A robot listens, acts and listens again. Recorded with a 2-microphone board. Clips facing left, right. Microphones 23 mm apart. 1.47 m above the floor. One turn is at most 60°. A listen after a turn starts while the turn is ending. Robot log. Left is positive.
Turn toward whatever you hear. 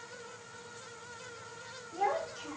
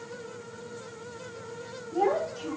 cmd yaw +30
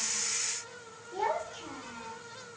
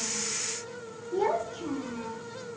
note: So it is at 155° left.
cmd yaw +60
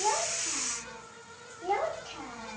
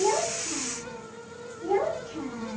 note: The child speaking is now 110° left.
cmd yaw +60
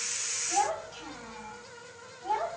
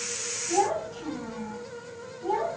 note: The child speaking is now 30° left.
cmd yaw +30
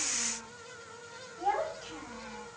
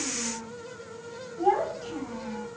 end: Found it: a child speaking, straight ahead, 2 to 4 m away.